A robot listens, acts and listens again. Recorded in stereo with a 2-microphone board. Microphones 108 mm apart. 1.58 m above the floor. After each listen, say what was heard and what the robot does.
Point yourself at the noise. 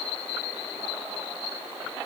Keep listening.
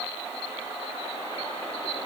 Keep listening.
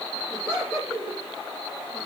Turn 30° right.
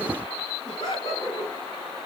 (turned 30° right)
So it is at 40° left. Turn 40° left.
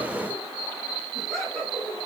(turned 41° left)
Facing the laughter, 2 to 4 m away.